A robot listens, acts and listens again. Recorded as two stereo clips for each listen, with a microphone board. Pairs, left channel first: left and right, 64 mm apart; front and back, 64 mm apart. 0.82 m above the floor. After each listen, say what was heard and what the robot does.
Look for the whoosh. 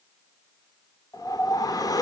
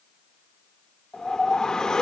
The whoosh: 80° left. Turn 80° left.
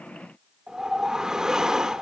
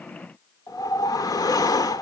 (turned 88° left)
The whoosh is now 10° right. Turn 10° right.
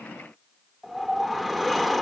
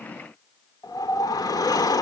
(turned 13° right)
Found it: a whoosh, straight ahead.